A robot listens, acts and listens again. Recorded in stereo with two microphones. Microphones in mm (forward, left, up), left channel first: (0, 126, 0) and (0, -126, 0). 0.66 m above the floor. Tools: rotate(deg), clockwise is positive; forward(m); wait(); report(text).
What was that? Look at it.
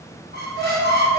rotate(45)
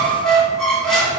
report("Found it: a squeak, straight ahead.")